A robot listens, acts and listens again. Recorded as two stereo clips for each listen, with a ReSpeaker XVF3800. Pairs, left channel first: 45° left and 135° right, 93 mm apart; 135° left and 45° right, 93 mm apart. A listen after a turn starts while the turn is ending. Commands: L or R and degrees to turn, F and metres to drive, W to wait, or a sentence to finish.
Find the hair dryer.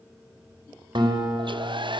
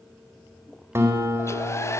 R165
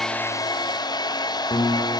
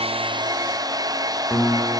Facing the hair dryer, under 1 m away.